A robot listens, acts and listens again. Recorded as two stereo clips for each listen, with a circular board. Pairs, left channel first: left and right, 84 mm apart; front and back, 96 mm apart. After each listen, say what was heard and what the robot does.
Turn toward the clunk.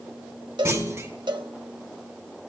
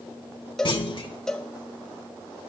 The clunk: 30° right. Turn 30° right.
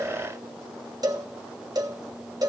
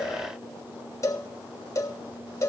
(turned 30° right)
Facing where the clunk came from. I can't hear it now.